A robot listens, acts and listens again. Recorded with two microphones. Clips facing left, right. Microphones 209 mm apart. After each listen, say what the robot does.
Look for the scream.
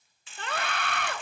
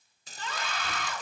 Turn 65° left.
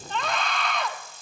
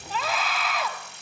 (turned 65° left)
Found it: a scream, straight ahead, 1 to 2 m away.